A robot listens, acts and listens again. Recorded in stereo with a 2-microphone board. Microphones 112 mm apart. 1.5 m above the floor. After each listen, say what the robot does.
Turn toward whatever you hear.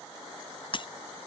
Turn 50° left.
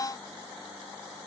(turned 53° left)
Keep listening.
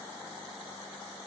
I heard breaking glass, but can't make it out now. It was about 5° right or 80° left.